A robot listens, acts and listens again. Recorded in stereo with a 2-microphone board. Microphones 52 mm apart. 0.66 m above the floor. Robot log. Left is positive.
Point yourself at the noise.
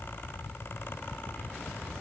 cmd idle
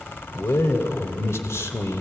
note: The man speaking: about 65° left or 115° left.
cmd yaw +65
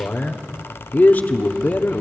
note: So it is at 40° left.
cmd yaw +40
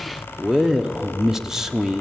note: The man speaking is now 10° right.
cmd yaw -10
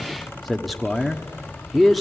end: Found it: a man speaking, straight ahead, 1 to 2 m away.